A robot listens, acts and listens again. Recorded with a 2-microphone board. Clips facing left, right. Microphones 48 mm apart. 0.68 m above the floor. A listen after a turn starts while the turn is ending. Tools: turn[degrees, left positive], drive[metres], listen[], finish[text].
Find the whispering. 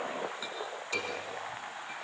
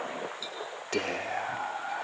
Thought: The whispering: about 55° right or 125° right.
Action: turn[-55]
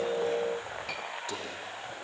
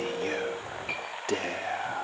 Thought: So it is at 60° right.
Action: turn[-60]
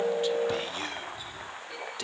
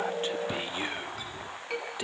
Thought: The whispering is now 20° right.
Action: turn[-20]
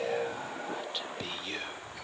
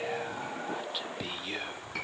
Action: finish[Facing the whispering, 1 to 2 m away.]